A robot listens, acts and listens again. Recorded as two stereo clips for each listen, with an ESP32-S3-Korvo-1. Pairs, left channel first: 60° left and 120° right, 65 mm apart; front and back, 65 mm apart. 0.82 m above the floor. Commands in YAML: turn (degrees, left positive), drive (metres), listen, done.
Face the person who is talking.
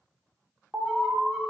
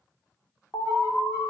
listen: true
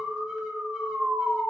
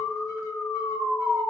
listen: true
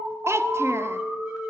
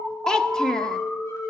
turn: -80
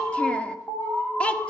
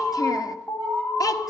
turn: -10
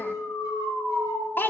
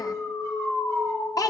done: "Facing the child speaking, under 1 m away."